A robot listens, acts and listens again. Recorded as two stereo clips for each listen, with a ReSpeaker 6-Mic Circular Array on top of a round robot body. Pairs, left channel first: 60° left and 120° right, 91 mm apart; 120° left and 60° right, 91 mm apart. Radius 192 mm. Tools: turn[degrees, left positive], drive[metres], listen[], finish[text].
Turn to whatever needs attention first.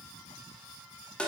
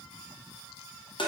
Action: listen[]
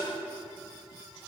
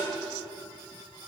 Action: listen[]
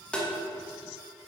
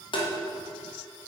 Action: finish[I can't make out anything urgent to turn to.]